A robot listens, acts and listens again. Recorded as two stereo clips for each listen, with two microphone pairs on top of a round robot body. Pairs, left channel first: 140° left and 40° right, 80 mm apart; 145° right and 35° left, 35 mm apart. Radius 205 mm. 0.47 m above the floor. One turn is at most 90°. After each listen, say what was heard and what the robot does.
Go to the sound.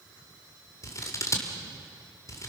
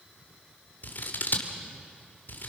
The scissors: 170° right. Turn 90° right.
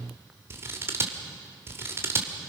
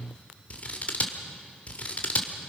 The scissors is now 95° right. Turn 90° right.
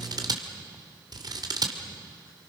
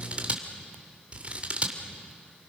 The scissors is now 15° right. Turn 15° right.
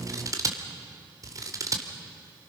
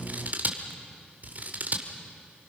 Drive 1.0 m forward.
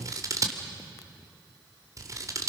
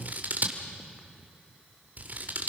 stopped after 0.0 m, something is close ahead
Something is in my way. I am facing the scissors but have not reached it.